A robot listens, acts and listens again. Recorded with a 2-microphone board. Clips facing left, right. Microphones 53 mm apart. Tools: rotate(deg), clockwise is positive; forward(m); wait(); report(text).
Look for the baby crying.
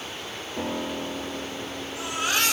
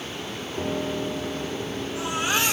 rotate(20)
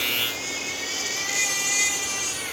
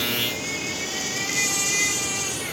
report("Found it: a baby crying, straight ahead, over 4 m away.")